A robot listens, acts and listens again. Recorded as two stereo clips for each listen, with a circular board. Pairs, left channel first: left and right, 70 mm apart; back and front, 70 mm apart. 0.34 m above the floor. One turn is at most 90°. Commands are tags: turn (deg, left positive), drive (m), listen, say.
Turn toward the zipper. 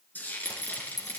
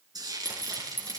<turn deg="60"/>
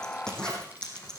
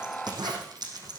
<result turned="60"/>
<turn deg="10"/>
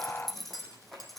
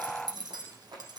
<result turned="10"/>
<say>Facing the zipper.</say>